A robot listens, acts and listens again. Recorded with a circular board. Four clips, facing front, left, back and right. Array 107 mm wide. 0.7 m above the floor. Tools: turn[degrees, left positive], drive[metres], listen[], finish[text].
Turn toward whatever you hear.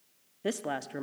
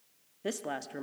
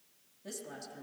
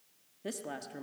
Thought: The woman speaking: 20° left.
Action: turn[20]
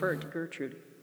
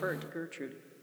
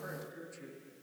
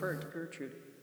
Thought: The woman speaking is now 10° left.
Action: turn[10]
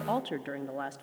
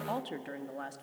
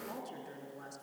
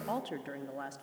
Action: finish[Found it: a woman speaking, straight ahead.]